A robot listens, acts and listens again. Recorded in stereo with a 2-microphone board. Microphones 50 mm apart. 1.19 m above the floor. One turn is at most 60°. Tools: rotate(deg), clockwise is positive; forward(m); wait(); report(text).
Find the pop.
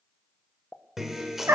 rotate(-35)
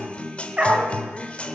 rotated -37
wait()
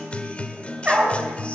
report("I heard a pop, but can't make it out now. It was about straight ahead or 110° left.")